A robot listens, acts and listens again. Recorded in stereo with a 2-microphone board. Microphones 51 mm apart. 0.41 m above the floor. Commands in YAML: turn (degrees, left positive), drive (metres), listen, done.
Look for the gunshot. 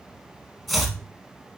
listen: true
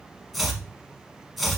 listen: true
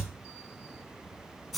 done: "I can't make out a gunshot, only chopping."